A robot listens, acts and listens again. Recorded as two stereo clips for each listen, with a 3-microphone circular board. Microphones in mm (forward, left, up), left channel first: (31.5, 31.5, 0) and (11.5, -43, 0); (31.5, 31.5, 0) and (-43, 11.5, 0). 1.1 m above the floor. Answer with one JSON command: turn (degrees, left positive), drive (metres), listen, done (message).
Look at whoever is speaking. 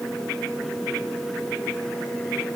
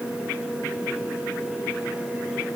{"listen": true}
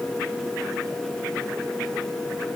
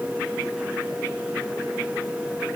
{"listen": true}
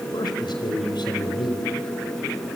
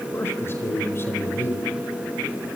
{"turn": 75}
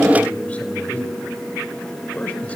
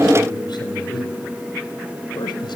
{"done": "Facing the man speaking, over 4 m away."}